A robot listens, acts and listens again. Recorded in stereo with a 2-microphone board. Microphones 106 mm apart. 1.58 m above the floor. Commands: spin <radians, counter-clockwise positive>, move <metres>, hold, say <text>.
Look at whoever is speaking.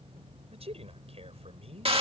spin -1.22
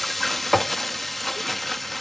hold
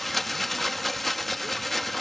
hold
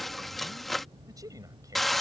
spin -0.61
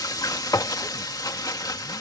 hold
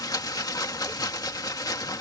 hold
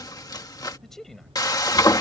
say Facing the man speaking.